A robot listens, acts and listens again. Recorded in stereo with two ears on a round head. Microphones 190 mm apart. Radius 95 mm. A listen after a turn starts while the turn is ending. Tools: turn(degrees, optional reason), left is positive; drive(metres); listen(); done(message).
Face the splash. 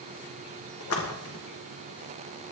turn(degrees=90)
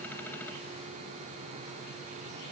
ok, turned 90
done("Facing where the splash came from. I can't hear it now.")